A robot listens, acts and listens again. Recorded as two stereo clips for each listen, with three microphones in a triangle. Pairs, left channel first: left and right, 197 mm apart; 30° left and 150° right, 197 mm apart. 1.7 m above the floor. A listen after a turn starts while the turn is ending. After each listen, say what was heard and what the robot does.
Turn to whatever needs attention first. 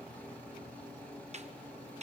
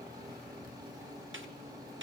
Keep listening.
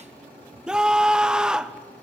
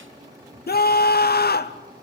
Facing the scream, under 1 m away.